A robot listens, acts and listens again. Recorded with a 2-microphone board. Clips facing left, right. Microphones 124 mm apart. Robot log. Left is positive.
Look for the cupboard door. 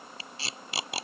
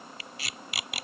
cmd idle
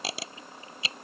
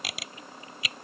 cmd idle
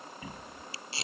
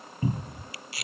note: The cupboard door: about 35° right or 145° right.
cmd yaw -35
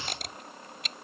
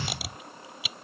note: So it is at 110° right.
cmd yaw -110
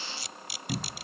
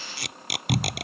end: Facing the cupboard door.